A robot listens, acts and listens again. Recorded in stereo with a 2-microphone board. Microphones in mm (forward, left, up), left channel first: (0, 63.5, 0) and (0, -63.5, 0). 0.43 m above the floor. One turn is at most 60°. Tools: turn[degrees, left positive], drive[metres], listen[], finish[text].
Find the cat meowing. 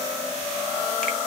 Action: listen[]
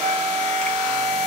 Action: listen[]
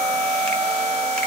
Action: finish[I can't make out a cat meowing, only a flute.]